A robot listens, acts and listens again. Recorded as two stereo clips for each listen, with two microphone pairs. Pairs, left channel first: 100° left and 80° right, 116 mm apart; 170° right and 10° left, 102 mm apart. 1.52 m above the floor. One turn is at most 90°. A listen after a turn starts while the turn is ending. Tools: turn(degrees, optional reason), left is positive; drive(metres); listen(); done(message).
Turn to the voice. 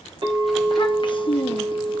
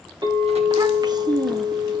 turn(degrees=55, reason="The child speaking: 55° left.")
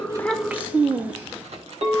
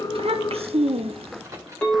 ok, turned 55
done("Found it: a child speaking, straight ahead, under 1 m away.")